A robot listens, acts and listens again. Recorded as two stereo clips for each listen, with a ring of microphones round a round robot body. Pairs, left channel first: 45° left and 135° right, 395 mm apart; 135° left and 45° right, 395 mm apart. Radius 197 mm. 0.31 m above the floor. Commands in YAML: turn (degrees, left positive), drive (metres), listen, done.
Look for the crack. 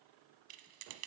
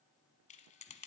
listen: true
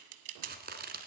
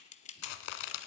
turn: 155
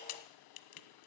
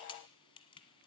done: "Facing where the crack came from. I can't hear it now."